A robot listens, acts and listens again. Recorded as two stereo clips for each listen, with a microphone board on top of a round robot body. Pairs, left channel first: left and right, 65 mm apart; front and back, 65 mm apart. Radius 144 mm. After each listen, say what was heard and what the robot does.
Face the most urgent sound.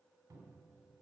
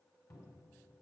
Keep listening.
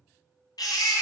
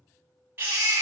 The baby crying: 120° left. Turn 120° left.
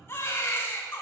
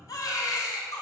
The baby crying is now 35° left. Turn 35° left.
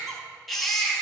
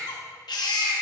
Found it: a baby crying, straight ahead.